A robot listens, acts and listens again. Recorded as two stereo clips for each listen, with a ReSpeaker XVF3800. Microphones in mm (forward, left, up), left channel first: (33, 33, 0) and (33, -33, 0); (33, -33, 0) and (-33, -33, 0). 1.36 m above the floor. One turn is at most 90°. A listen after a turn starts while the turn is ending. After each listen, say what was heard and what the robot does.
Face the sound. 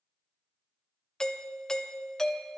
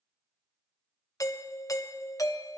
The doorbell: 10° left. Turn 10° left.
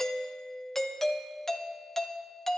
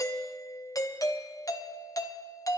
Found it: a doorbell, straight ahead, under 1 m away.